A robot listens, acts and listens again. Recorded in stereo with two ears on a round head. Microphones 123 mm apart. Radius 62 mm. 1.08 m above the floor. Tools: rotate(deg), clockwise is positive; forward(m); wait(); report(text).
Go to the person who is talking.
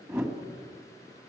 wait()
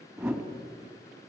wait()
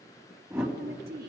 rotate(70)
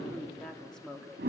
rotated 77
forward(1.0)
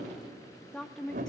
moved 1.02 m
forward(1.0)
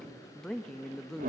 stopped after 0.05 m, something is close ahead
report("I am next to the woman speaking.")